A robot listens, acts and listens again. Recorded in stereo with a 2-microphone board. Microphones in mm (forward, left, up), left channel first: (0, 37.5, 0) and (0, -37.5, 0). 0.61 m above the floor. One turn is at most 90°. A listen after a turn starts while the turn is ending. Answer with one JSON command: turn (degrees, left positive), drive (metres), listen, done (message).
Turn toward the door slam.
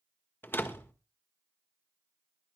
{"turn": 30}
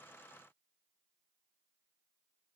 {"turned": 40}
{"listen": true}
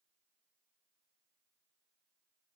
{"done": "I heard a door slam, but can't make it out now. It was about 10° right or 110° left."}